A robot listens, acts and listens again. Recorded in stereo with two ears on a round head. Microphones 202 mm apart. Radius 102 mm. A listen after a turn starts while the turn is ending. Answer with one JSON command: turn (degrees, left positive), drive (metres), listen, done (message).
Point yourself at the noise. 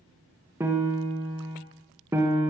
{"turn": -30}
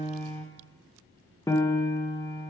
{"turn": 15}
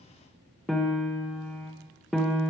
{"done": "Found it: a piano, straight ahead."}